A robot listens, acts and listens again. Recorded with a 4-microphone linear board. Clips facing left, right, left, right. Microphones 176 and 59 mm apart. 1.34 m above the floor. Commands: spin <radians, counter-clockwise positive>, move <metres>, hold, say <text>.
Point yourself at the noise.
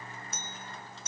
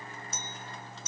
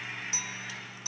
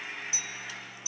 spin 0.96
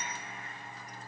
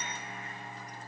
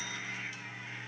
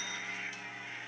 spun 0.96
hold
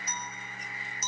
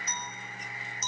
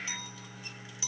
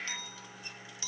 spin 0.17
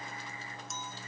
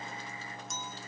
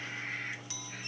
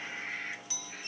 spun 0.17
say Found it: a clink, straight ahead.